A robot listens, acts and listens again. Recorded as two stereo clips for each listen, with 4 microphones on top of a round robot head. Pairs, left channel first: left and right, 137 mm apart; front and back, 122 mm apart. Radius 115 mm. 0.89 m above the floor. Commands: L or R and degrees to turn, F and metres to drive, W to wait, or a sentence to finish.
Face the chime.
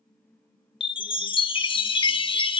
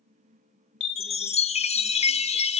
L35
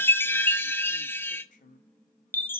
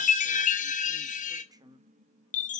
L15
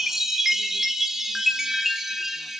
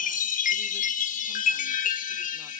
Facing the chime.